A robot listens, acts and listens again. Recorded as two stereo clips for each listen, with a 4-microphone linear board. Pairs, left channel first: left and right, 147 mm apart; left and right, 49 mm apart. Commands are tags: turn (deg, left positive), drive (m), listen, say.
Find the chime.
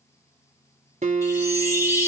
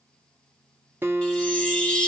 <turn deg="20"/>
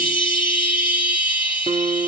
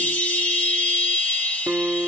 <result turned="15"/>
<turn deg="145"/>
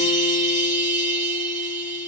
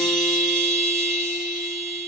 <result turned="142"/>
<say>Found it: a chime, straight ahead.</say>